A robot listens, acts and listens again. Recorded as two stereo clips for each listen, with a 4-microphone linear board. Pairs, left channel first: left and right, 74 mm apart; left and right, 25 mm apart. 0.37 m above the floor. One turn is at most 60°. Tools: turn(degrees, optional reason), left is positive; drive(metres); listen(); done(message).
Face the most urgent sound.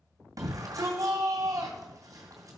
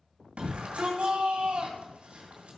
turn(degrees=-50, reason="The shout: about 50° right or 130° right.")
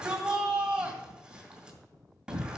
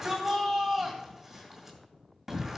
turn(degrees=-10, reason="So it is at 10° right.")
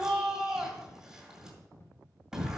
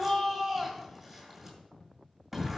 done("Facing the shout.")